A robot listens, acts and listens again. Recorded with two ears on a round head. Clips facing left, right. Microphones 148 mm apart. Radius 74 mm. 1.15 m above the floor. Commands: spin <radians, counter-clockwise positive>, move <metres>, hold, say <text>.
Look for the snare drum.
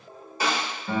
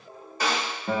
spin 0.52
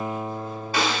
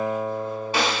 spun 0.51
spin -0.35
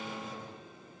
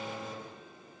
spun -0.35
hold
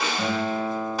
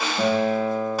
say Facing the snare drum.